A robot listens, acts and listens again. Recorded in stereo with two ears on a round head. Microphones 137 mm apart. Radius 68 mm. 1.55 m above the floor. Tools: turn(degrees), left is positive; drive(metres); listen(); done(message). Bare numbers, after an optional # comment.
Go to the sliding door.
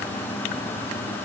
listen()
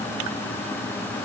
listen()
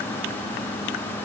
done("I can't make out a sliding door to turn to.")